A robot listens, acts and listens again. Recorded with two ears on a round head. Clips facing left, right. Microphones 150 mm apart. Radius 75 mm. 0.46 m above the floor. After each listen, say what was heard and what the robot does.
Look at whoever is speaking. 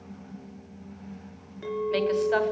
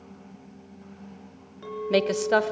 The woman speaking: about 55° right or 125° right. Turn 55° right.
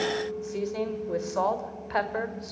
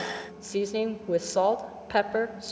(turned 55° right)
So it is at 45° right. Turn 45° right.
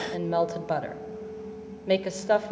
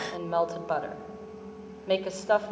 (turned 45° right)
The woman speaking is now 15° left. Turn 15° left.
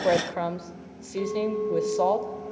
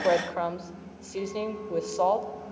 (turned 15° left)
Facing the woman speaking.